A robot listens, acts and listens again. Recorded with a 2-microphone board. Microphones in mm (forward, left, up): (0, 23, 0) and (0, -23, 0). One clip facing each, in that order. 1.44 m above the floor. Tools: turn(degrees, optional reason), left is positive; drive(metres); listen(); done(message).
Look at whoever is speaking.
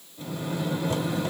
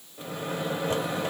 listen()
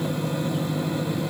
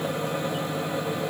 listen()
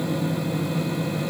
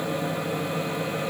done("I can't make out anyone speaking, only a microwave.")